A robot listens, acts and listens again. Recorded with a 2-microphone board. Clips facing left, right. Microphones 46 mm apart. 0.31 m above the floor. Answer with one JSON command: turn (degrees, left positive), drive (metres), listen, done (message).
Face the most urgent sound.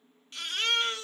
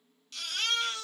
{"turn": 30}
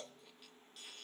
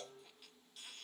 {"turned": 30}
{"listen": true}
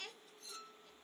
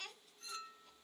{"listen": true}
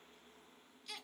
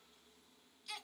{"done": "Found it: a baby crying, straight ahead."}